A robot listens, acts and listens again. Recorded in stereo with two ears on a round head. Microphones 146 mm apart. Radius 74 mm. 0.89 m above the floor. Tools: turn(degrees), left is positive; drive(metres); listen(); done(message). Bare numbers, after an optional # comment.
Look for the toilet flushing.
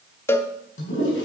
turn(90)
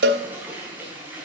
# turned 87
# So it is at 10° right.
turn(-10)
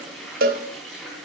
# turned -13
done("Facing the toilet flushing, over 4 m away.")